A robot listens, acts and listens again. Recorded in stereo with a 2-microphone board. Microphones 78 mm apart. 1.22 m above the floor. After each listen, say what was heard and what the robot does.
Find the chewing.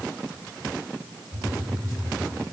Keep listening.
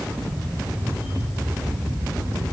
Keep listening.
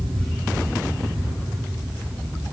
I can't make out chewing, only a camera shutter and a phone buzzing.